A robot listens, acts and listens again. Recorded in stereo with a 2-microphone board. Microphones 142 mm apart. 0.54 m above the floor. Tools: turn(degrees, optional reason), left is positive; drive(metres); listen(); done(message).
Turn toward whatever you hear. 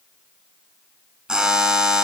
turn(degrees=-30)
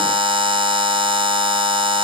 turn(degrees=-145, reason="So it is at 145° right.")
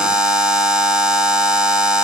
done("Facing the buzzer.")